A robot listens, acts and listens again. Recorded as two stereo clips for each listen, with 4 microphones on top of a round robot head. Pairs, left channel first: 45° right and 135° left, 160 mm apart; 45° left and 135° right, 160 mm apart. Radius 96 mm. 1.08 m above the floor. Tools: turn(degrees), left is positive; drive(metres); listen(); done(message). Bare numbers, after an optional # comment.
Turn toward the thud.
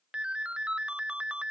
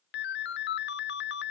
listen()
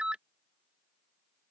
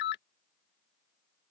listen()
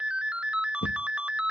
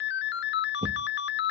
# The thud: 75° right.
turn(-75)
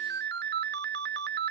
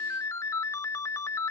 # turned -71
done("Facing where the thud came from. I can't hear it now.")